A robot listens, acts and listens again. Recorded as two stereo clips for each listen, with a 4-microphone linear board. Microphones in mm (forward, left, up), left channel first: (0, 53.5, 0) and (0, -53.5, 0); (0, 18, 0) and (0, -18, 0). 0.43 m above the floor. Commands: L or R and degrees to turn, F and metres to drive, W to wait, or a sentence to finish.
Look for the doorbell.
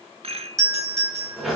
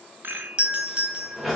R30
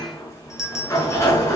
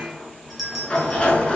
Found it: a doorbell, straight ahead.